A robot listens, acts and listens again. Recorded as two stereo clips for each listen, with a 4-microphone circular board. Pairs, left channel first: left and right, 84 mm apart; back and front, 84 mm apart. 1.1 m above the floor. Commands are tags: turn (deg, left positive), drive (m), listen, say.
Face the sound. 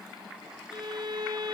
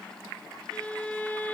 <turn deg="-110"/>
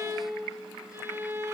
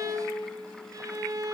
<turn deg="-35"/>
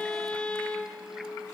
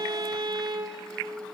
<turn deg="15"/>
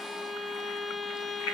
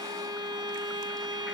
<say>Found it: a violin, straight ahead.</say>